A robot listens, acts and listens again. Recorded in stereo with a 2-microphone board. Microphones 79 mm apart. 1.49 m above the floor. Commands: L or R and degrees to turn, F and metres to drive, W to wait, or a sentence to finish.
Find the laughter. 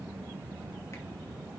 W
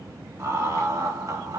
R45
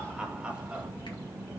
R15
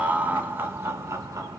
R40
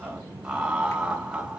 R15
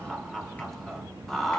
Found it: laughter, straight ahead, 1 to 2 m away.